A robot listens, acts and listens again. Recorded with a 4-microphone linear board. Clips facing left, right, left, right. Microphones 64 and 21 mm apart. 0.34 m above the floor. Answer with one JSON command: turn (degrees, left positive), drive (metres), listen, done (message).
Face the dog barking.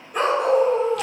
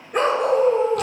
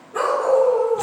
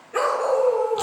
{"turn": -70}
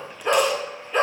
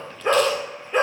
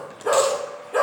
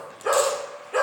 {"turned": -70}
{"turn": -25}
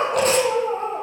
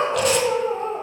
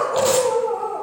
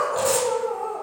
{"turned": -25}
{"turn": 20}
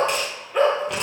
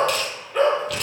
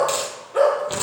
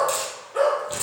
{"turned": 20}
{"done": "Found it: a dog barking, straight ahead."}